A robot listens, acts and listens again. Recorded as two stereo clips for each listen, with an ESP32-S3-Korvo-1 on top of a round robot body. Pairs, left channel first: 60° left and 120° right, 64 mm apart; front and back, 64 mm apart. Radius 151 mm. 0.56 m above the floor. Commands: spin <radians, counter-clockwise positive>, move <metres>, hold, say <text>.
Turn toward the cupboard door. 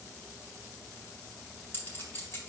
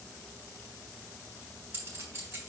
hold
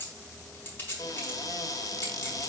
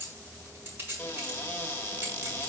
spin 1.05
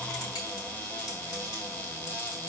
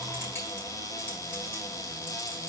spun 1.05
say Facing the cupboard door.